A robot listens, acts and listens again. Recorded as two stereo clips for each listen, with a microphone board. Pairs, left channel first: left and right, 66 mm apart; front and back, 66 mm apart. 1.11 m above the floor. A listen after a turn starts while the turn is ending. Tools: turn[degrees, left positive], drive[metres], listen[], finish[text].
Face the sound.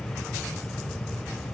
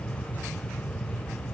Action: listen[]
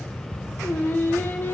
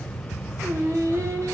Thought: The singing: 145° left.
Action: turn[145]
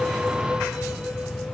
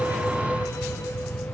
Action: listen[]
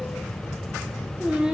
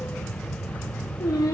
Thought: The singing is now 15° right.
Action: turn[-15]
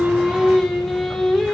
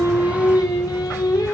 Action: finish[Found it: singing, straight ahead.]